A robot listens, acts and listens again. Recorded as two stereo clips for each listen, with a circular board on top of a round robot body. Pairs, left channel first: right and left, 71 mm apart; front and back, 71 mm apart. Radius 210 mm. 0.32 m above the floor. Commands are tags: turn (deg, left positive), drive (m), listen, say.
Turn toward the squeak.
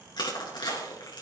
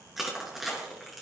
<listen/>
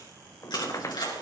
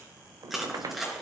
<turn deg="-140"/>
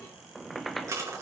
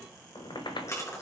<say>Found it: a squeak, straight ahead.</say>